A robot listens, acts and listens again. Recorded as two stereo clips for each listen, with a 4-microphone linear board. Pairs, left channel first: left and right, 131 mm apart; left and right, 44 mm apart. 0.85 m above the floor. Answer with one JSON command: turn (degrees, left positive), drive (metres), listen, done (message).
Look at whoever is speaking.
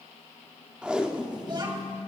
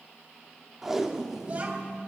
{"turn": -35}
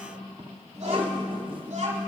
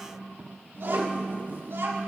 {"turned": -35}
{"turn": -120}
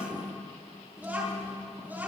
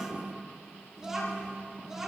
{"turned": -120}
{"turn": -15}
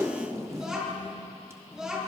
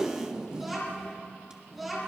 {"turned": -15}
{"done": "Facing the child speaking, over 4 m away."}